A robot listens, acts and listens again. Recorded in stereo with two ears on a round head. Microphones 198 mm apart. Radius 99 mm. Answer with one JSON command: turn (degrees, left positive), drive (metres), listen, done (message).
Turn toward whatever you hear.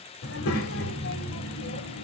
{"turn": 60}
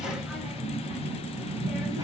{"turn": -15}
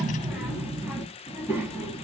{"turn": -15}
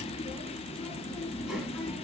{"done": "Found it: a child speaking, straight ahead, 2 to 4 m away."}